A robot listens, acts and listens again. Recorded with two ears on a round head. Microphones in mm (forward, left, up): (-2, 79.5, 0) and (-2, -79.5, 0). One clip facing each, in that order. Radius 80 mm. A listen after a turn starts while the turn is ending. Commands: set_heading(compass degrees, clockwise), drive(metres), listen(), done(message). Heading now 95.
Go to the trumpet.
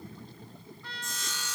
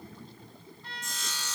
set_heading(30)
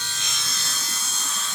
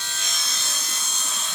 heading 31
listen()
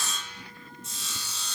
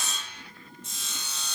listen()
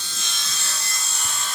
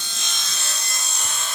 done("I heard a trumpet, but can't make it out now. It was about straight ahead or 55° left. I did not reach it.")